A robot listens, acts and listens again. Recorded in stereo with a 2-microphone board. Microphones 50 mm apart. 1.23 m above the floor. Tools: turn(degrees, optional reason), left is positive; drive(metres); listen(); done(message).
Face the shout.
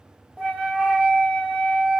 listen()
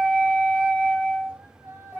turn(degrees=-60, reason="The shout: about 60° right or 120° right.")
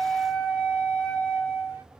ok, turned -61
listen()
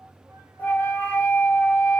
listen()
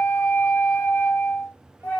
done("I heard a shout, but can't make it out now. It was about straight ahead or 60° right.")